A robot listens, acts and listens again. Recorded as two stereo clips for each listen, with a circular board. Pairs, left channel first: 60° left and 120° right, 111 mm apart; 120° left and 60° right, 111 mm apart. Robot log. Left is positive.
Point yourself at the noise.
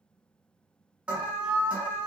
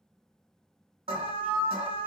note: The alarm: 45° right.
cmd yaw -45
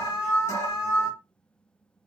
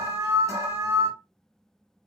end: Facing the alarm.